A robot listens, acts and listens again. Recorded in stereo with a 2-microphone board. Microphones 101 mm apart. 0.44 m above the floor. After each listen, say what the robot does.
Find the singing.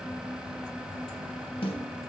Keep listening.
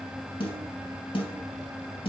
Keep listening.
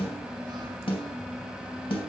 I can't make out singing to turn to.